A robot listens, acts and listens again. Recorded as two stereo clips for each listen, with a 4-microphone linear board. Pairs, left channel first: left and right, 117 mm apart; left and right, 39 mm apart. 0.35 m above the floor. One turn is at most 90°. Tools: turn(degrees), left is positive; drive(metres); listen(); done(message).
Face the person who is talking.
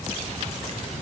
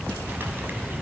listen()
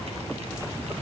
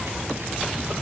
listen()
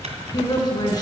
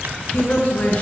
turn(degrees=35)
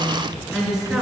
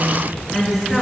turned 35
done("Found it: a woman speaking, straight ahead.")